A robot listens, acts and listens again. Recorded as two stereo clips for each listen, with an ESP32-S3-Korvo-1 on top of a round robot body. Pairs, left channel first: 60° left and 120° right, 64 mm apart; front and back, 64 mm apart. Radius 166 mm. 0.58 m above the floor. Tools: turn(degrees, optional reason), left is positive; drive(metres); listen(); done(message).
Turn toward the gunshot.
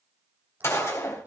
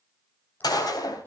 turn(degrees=10, reason="The gunshot: 10° left.")
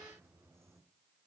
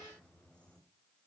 done("Facing where the gunshot came from. I can't hear it now.")